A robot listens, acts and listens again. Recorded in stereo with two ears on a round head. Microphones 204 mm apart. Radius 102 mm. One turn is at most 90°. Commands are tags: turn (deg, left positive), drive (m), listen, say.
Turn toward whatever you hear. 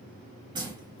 <turn deg="-20"/>
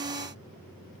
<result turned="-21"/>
<listen/>
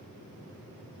<say>I heard a splash, but can't make it out now. It was about straight ahead or 140° right.</say>